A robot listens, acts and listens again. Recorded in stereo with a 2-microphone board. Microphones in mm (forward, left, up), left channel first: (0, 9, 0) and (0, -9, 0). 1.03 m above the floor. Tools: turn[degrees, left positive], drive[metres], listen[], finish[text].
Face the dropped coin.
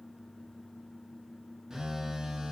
Action: listen[]
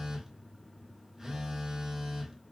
Action: listen[]
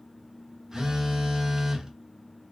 Action: finish[I can't make out a dropped coin, only a phone buzzing.]